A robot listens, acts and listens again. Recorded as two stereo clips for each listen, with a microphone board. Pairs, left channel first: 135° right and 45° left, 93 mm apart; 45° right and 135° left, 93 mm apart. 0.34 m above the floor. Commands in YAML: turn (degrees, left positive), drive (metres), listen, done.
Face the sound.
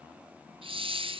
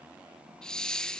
turn: 35
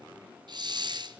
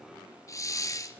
turn: 10
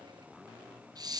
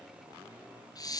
done: "Found it: a hiss, straight ahead."